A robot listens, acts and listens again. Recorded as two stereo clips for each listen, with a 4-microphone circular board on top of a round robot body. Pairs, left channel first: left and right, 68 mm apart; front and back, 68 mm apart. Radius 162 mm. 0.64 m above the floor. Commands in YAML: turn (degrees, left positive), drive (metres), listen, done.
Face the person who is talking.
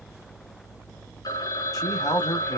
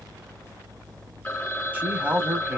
turn: 115
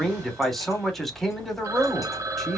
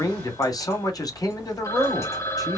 done: "Facing the man speaking, 2 to 4 m away."